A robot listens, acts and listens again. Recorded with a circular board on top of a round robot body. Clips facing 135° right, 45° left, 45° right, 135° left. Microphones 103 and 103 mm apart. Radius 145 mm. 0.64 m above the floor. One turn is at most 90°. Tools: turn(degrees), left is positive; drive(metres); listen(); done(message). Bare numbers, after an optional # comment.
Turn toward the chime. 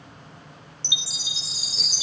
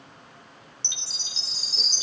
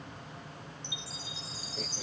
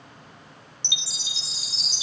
# The chime: 145° left.
turn(90)
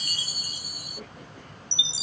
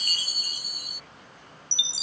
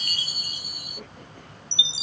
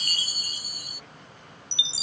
# The chime is now 85° left.
turn(85)
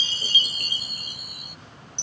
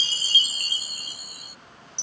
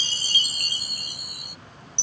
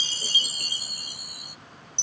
# The chime is now 10° right.
turn(-10)
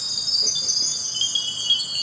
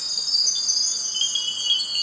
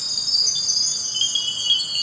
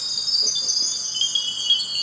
done("Facing the chime.")